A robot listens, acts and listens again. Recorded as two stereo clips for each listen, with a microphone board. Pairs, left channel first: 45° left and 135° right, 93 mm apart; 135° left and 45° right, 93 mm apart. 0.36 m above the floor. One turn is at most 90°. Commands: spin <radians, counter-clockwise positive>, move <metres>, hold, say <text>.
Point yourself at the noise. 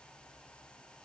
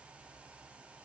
hold
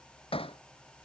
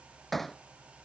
spin 0.79
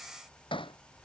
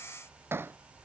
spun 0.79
spin 0.35
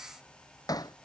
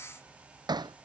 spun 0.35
say Facing the hammering.